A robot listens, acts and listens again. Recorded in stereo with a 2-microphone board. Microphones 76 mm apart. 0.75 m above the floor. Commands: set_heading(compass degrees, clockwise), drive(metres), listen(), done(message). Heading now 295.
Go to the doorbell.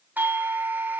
set_heading(320)
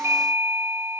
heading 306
set_heading(341)
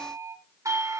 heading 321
set_heading(91)
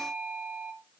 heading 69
set_heading(89)
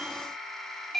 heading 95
drive(1.0)
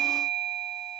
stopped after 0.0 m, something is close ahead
set_heading(85)
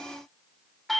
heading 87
done("Something is in my way. I am facing the doorbell but have not reached it.")